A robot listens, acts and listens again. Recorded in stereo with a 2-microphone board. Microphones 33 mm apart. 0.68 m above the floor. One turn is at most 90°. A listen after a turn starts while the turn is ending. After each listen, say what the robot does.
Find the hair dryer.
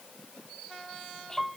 Keep listening.
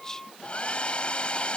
Turn 35° left.
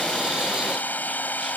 Turn 90° left.
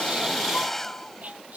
Turn 10° left.
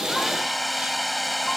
Facing the hair dryer.